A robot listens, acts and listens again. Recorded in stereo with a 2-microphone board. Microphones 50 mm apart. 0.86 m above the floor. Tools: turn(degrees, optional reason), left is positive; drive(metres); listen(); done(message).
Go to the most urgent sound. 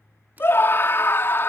turn(degrees=55, reason="The scream: about 55° left or 125° left.")
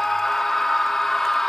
drive(metres=1.0)
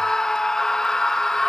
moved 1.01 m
turn(degrees=15, reason="The scream is now 15° left.")
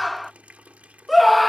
drive(metres=1.0)
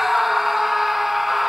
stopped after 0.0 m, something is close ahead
done("Arrived at the scream, straight ahead.")